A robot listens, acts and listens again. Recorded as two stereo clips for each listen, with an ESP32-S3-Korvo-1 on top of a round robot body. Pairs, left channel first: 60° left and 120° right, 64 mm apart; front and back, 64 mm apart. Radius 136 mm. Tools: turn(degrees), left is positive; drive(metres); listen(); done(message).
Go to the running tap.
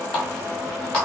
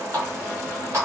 turn(degrees=135)
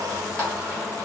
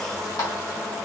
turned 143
turn(degrees=-10)
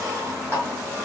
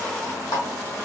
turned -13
drive(metres=1.0)
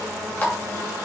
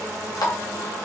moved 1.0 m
drive(metres=1.0)
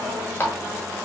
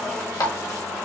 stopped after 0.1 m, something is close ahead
done("I am next to the running tap.")